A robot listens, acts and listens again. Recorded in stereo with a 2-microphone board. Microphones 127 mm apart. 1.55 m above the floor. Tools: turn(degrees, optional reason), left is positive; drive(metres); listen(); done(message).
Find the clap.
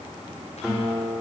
listen()
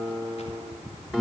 listen()
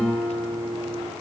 done("I can't make out a clap to turn to.")